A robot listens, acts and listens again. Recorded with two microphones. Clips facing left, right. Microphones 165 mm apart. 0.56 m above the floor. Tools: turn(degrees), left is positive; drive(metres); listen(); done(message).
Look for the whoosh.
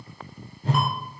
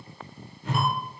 turn(degrees=35)
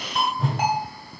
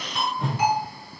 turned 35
done("Facing the whoosh, under 1 m away.")